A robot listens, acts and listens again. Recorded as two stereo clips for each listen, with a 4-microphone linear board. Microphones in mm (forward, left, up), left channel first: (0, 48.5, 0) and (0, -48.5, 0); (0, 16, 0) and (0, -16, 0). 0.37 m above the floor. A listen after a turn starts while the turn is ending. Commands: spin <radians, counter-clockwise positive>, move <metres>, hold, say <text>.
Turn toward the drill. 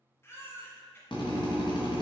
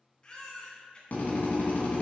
spin 1.05
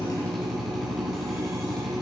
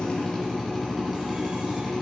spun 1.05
say Facing the drill, 2 to 4 m away.